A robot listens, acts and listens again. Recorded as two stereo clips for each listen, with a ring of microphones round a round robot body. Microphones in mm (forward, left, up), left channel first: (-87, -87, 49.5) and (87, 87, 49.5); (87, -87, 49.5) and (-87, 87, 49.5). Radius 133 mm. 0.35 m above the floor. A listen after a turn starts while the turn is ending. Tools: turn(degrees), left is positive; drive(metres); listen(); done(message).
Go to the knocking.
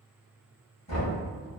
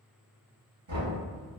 turn(degrees=160)
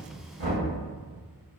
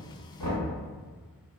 turn(degrees=25)
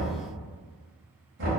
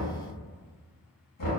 drive(metres=1.0)
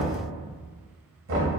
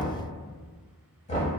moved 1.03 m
turn(degrees=15)
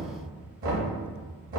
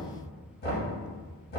drive(metres=1.0)
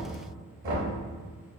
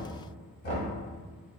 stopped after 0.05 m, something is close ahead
done("Arrived at the knocking, straight ahead.")